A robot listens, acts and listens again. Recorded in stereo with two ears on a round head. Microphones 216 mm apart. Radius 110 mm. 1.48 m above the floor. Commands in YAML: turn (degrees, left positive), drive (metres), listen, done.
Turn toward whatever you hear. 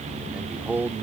turn: -30
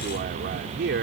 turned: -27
turn: -130
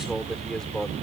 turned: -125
done: "Found it: a man speaking, straight ahead."